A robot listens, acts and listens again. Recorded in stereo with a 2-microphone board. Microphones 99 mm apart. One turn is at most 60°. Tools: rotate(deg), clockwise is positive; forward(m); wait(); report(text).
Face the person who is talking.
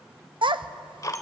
rotate(60)
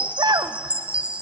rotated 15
rotate(45)
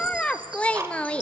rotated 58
rotate(-10)
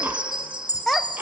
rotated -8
report("Facing the child speaking, under 1 m away.")